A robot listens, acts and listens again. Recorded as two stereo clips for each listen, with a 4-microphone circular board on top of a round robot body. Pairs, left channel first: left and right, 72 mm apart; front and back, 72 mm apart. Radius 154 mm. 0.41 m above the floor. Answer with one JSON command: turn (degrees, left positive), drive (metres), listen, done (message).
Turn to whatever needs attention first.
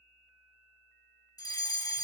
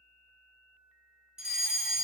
{"turn": 100}
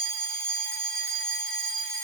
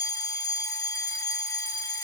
{"turn": 15}
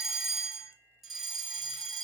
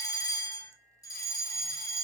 {"done": "Facing the fire alarm, 2 to 4 m away."}